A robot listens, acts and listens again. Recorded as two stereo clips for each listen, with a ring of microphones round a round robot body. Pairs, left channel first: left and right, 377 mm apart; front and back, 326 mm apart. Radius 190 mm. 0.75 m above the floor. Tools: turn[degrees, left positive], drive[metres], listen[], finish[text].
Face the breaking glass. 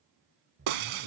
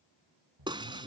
Thought: The breaking glass: 100° right.
Action: turn[-100]
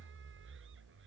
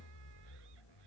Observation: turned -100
Action: finish[I heard breaking glass from this way, but can't make it out now.]